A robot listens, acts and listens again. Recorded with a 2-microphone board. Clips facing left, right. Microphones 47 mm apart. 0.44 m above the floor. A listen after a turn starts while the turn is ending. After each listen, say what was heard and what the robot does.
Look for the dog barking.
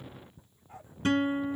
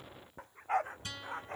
Turn 90° right.
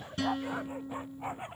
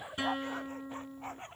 So it is at 15° left. Turn 15° left.
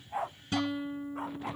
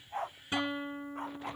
Facing the dog barking.